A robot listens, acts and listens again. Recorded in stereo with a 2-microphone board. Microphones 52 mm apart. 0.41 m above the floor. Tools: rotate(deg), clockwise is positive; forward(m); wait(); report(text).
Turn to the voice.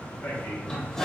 rotate(-55)
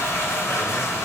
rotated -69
wait()
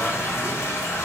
wait()
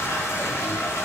report("I heard a man speaking, but can't make it out now. It was about 15° right or 60° left.")